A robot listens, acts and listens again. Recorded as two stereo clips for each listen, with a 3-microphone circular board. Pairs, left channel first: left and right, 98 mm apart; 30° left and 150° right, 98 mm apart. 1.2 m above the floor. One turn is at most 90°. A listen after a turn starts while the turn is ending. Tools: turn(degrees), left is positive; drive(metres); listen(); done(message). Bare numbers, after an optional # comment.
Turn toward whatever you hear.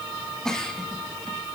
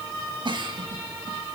# The giggle: 175° left.
turn(90)
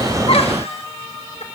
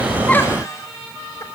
# Nothing new. It was at 85° left.
turn(85)
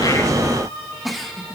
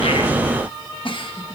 done("Found it: a giggle, straight ahead, 1 to 2 m away.")